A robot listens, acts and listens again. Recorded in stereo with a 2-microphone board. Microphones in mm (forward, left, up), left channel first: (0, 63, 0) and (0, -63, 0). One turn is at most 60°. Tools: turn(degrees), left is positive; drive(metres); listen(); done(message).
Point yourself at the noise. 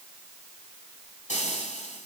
turn(degrees=60)
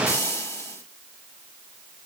turn(degrees=20)
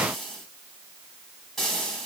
done("Found it: frying, straight ahead, over 4 m away.")